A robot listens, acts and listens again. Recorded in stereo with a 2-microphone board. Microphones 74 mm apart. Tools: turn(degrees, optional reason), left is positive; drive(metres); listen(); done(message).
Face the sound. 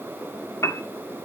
turn(degrees=45, reason="The piano: about 45° left or 135° left.")
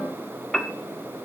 done("Found it: a piano, straight ahead, 1 to 2 m away.")